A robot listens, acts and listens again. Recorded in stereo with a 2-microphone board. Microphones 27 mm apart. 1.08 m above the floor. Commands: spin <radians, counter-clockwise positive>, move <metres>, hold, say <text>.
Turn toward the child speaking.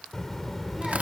spin 0.52
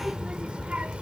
spin -0.79
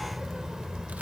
spin -0.52
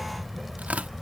say Found it: a child speaking, straight ahead.